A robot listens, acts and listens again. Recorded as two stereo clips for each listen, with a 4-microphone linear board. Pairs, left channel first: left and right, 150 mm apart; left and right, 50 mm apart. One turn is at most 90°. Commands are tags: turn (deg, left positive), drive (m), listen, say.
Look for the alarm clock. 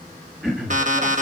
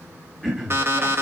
<turn deg="-55"/>
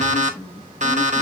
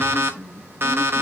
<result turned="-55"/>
<turn deg="-60"/>
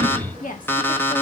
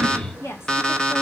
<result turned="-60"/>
<turn deg="15"/>
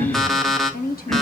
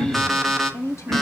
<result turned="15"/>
<say>Found it: an alarm clock, straight ahead, 1 to 2 m away.</say>